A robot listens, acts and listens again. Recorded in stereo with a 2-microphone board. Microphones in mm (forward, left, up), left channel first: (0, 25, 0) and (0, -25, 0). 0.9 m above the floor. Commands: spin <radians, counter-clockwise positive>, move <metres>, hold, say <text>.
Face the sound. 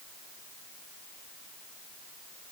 hold
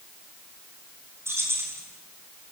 spin -1.05
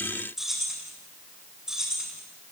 spin -0.26
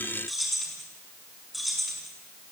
say Facing the keys jangling, over 4 m away.